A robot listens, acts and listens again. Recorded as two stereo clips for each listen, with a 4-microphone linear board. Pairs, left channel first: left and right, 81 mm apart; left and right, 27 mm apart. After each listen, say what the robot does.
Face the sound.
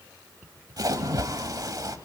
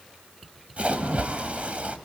Turn 55° right.
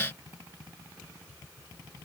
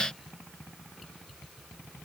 Keep listening.
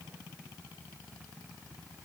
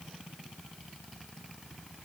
I heard a splash, but can't make it out now. It was about straight ahead or 70° right.